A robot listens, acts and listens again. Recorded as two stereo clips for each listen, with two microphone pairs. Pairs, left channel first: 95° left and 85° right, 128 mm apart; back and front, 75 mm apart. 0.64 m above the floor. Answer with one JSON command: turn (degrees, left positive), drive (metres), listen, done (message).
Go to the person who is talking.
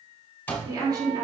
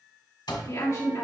{"turn": -140}
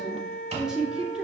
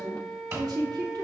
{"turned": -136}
{"drive": 1.0}
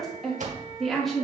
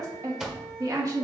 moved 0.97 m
{"drive": 1.0}
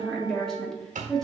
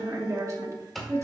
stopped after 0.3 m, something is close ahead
{"turn": 10}
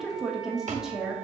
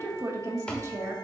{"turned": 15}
{"done": "Arrived at the woman speaking, straight ahead."}